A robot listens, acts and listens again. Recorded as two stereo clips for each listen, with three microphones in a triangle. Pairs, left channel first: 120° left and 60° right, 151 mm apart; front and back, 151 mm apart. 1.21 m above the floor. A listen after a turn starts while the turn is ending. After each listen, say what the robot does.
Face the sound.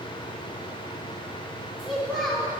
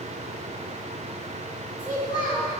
Turn 30° left.
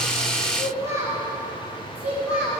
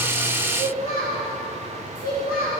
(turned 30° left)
Turn 25° left.
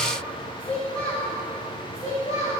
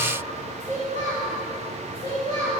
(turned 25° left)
Turn 50° left.
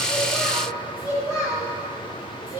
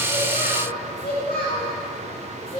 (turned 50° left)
Turn 10° right.
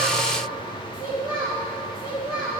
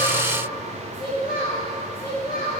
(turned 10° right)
Found it: a child speaking, straight ahead.